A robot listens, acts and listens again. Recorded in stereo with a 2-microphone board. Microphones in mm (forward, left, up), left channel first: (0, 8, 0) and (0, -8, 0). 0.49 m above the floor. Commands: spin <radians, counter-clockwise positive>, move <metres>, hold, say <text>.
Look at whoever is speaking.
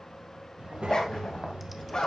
spin -1.22
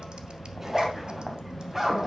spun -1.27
spin -0.61
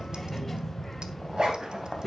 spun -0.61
say Facing the child speaking, 1 to 2 m away.